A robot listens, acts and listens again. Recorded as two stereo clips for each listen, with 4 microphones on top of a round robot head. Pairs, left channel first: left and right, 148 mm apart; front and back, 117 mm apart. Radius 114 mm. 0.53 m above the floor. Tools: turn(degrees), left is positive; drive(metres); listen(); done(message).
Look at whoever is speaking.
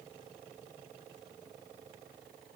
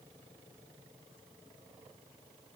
listen()
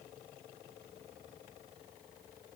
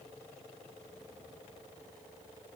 listen()
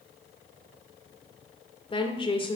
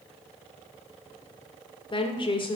turn(degrees=40)
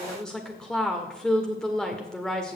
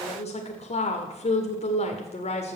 done("Found it: a woman speaking, straight ahead, 1 to 2 m away.")